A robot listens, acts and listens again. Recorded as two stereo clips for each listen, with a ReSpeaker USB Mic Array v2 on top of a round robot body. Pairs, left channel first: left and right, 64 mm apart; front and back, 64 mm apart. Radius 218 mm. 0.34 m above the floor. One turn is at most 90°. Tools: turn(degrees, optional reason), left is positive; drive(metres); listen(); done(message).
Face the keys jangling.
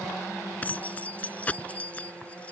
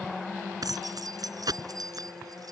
turn(degrees=90, reason="The keys jangling: 160° left.")
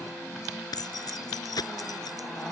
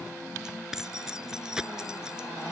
turn(degrees=90, reason="The keys jangling is now 100° left.")
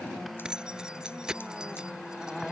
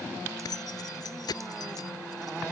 turn(degrees=-10, reason="The keys jangling is now 10° right.")
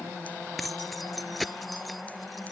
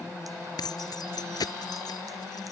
done("Found it: keys jangling, straight ahead.")